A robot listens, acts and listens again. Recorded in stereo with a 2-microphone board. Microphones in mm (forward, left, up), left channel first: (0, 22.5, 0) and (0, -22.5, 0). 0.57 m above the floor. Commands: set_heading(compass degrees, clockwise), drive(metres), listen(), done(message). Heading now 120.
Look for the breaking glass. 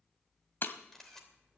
set_heading(65)
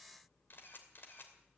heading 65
listen()
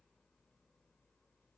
done("I heard breaking glass, but can't make it out now. It was about straight ahead or 70° left.")